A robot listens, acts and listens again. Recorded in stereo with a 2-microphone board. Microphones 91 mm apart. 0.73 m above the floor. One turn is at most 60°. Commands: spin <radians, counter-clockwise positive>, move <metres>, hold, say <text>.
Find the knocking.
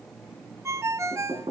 spin -1.05
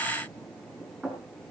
spin -0.26
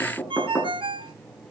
say Found it: knocking, straight ahead, over 4 m away.